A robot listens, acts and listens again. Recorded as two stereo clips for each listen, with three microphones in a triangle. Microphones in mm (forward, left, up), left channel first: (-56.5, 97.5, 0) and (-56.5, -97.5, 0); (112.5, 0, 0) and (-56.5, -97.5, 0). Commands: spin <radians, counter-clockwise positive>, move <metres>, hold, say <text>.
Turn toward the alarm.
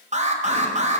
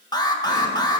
spin -0.70
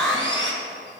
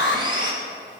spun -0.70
say Facing the alarm, 1 to 2 m away.